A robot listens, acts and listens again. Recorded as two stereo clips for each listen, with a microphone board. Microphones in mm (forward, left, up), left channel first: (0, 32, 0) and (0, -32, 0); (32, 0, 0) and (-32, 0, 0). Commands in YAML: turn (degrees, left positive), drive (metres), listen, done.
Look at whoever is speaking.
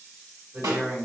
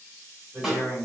turn: -130
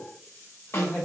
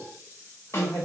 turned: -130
turn: 10
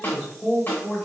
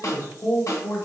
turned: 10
done: "Facing the man speaking, 1 to 2 m away."